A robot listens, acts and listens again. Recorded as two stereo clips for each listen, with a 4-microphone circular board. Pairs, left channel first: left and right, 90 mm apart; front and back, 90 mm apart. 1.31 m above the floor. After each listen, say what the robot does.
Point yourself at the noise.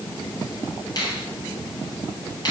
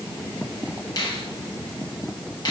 Turn 45° left.
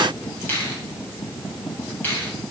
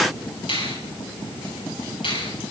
Turn 20° left.
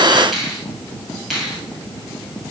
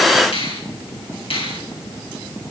Found it: a finger snap, straight ahead, over 4 m away.